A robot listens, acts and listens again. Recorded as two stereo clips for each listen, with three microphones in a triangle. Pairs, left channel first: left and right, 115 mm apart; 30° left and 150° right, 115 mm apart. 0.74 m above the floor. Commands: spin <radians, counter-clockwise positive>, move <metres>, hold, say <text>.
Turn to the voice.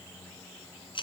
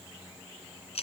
hold
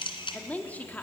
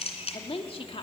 spin 0.35
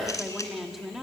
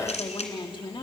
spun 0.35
say Found it: a woman speaking, straight ahead.